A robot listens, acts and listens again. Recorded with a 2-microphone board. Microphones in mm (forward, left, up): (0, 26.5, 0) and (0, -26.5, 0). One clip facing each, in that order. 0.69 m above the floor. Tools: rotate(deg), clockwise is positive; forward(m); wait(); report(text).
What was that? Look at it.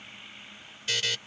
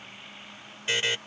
rotate(25)
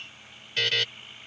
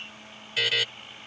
report("Facing the buzzer.")